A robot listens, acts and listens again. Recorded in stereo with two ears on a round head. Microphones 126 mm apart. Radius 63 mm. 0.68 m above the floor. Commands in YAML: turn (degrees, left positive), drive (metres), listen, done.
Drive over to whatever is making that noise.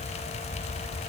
listen: true
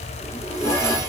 turn: 20
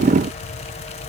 listen: true
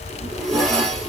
drive: 1.0
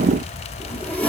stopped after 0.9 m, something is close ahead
turn: 15
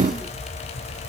listen: true
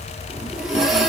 done: "I am next to the zipper."